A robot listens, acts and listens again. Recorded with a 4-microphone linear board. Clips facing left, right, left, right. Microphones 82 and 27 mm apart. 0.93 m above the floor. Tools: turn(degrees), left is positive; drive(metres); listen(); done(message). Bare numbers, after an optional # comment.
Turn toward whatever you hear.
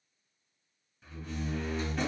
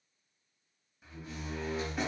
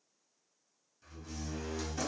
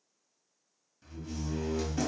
turn(-30)
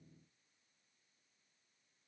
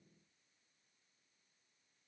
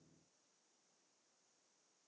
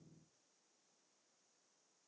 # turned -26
listen()
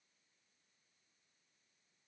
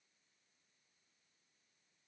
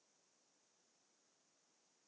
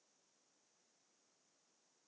done("I heard a door slam, but can't make it out now. It was about 20° left or 145° right.")